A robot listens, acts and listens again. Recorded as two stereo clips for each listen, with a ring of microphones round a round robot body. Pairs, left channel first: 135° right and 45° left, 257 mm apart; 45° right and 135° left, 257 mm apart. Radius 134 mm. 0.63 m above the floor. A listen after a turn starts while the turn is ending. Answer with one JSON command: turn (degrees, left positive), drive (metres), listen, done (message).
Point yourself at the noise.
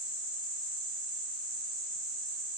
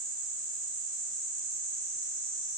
{"listen": true}
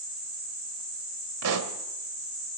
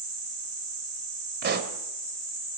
{"turn": 80}
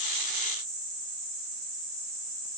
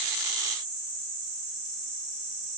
{"done": "Facing where the pop came from. I can't hear it now."}